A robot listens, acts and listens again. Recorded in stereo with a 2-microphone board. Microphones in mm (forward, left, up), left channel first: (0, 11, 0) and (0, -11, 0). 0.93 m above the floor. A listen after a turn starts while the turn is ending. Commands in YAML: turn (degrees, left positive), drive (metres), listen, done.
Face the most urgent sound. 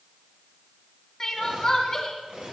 turn: 25
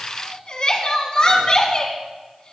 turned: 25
turn: 135
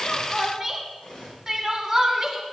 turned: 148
turn: -15
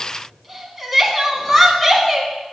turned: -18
done: "Facing the crying."